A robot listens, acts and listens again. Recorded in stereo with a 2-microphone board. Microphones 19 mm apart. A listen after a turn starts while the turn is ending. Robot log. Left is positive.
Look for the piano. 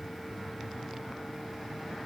cmd idle
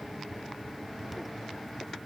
cmd idle
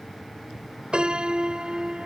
note: The piano: about 50° right or 130° right.
cmd yaw -50
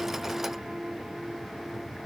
note: So it is at 75° right.
cmd yaw -75
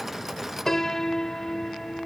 note: The piano is now 25° left.
cmd yaw +25
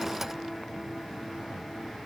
cmd idle
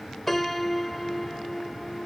note: The piano is now 10° left.
cmd yaw +10
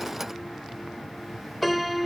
end: Facing the piano.